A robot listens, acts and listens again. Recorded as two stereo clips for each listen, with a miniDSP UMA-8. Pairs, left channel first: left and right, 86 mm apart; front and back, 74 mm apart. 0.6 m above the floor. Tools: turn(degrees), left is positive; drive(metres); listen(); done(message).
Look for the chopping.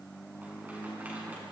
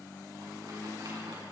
listen()
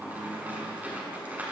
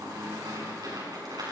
listen()
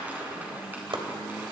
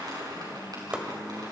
turn(degrees=-105)
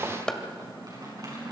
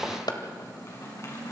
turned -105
turn(degrees=10)
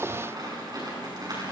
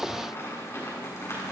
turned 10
listen()
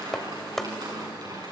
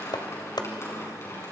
done("Found it: chopping, straight ahead.")